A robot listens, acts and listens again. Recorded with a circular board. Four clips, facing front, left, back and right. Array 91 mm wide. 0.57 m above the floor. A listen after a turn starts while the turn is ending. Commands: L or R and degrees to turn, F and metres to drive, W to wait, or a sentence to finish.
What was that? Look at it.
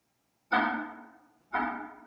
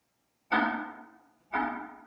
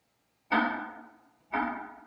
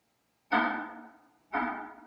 L165
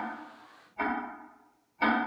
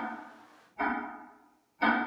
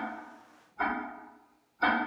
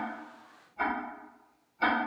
Facing the ticking, 1 to 2 m away.